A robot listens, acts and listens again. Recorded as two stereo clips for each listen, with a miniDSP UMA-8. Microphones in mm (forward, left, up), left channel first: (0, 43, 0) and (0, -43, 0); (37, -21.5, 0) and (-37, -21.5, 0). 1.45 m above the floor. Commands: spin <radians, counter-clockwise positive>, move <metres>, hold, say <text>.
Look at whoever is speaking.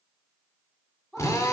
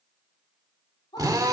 say Found it: a woman speaking, straight ahead, over 4 m away.